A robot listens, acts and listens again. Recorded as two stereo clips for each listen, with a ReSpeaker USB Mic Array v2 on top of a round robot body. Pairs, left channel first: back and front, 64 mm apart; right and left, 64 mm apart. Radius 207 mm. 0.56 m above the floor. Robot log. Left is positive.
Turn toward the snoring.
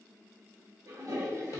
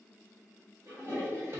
cmd idle
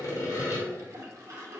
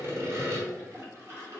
cmd idle
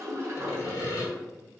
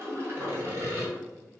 end: I can't make out snoring, only sawing and a toilet flushing.